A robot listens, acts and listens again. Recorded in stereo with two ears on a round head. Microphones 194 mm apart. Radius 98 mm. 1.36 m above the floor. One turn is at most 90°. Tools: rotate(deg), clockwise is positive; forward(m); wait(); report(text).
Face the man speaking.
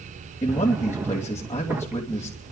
rotate(-30)
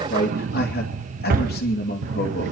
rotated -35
rotate(-90)
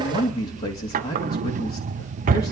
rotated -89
rotate(-45)
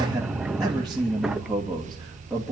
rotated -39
report("Facing the man speaking.")